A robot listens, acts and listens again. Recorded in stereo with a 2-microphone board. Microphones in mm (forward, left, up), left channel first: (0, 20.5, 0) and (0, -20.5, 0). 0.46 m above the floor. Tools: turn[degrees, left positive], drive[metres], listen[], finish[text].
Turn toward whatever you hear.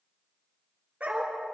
Thought: The dog barking: about 40° right or 140° right.
Action: turn[-40]
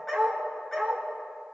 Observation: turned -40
Thought: So it is at 10° left.
Action: turn[10]
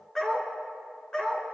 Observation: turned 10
Thought: The dog barking is now 25° left.
Action: turn[25]
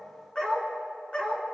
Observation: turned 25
Thought: The dog barking is now 30° left.
Action: turn[30]
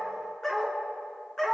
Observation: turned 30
Thought: The dog barking is now 10° left.
Action: turn[10]
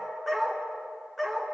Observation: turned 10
Action: finish[Facing the dog barking, 2 to 4 m away.]